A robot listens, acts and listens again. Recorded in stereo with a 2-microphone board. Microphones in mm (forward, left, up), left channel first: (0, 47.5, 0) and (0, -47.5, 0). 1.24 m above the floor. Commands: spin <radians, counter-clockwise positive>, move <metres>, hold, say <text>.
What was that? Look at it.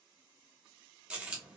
spin -0.52
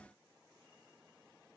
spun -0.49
hold
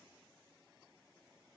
say I heard a dropped coin, but can't make it out now. It was about 15° left or 140° right.